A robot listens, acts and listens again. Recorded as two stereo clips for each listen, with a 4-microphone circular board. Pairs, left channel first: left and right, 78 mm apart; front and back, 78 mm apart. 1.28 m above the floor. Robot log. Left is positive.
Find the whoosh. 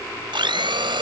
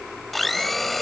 cmd idle
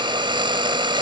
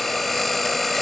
cmd idle
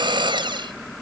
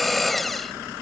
end: I can't make out a whoosh, only a blender.